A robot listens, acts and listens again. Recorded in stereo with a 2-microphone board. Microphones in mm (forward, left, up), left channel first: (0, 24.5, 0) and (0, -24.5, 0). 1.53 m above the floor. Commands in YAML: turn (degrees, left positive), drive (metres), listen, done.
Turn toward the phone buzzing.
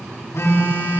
turn: 70
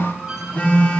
turn: 35
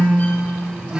turn: -15
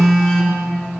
done: "Found it: a phone buzzing, straight ahead, 2 to 4 m away."